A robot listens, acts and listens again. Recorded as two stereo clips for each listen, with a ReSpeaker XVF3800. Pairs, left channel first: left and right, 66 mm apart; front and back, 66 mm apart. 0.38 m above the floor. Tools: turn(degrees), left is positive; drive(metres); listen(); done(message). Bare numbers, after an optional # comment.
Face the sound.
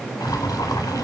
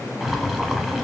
# The boiling: 85° left.
turn(85)
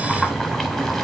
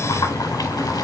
done("Facing the boiling, under 1 m away.")